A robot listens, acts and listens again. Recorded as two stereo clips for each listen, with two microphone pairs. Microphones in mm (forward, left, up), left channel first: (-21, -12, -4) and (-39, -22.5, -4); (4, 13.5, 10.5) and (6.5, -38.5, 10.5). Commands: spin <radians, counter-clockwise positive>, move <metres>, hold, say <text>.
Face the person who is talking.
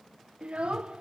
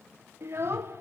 spin -2.18
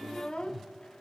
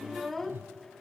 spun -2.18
say Found it: a child speaking, straight ahead.